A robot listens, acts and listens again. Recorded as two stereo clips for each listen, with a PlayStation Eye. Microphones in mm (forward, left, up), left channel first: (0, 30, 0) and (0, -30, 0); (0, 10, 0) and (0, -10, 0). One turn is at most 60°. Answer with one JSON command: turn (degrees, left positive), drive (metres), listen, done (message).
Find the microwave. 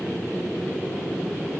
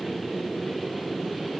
{"listen": true}
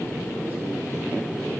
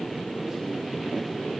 {"listen": true}
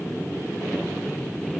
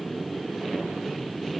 {"done": "I can't make out a microwave."}